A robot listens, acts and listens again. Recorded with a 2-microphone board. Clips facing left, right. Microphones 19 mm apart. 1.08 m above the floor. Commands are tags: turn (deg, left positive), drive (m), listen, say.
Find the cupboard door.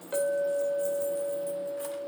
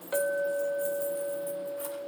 <listen/>
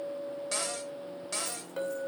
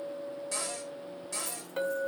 <turn deg="40"/>
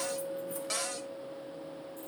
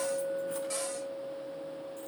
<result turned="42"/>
<turn deg="95"/>
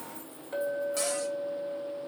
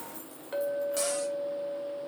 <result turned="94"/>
<listen/>
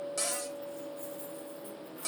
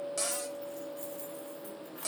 <say>Facing the cupboard door, 1 to 2 m away.</say>